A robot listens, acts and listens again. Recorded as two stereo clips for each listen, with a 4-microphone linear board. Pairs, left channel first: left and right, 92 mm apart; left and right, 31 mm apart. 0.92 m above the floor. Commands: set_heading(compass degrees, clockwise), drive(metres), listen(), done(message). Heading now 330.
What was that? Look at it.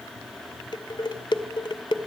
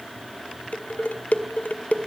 set_heading(275)
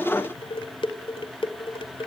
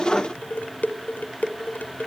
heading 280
set_heading(205)
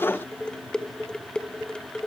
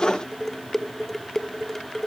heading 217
set_heading(207)
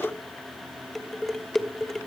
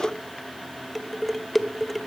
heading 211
done("Facing the dishes clattering.")